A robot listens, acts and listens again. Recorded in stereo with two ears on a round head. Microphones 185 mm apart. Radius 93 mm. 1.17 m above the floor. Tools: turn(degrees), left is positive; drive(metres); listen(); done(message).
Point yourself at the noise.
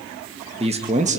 turn(degrees=-40)
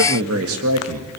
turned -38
turn(degrees=-100)
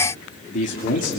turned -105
turn(degrees=40)
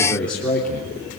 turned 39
done("Found it: a man speaking, straight ahead.")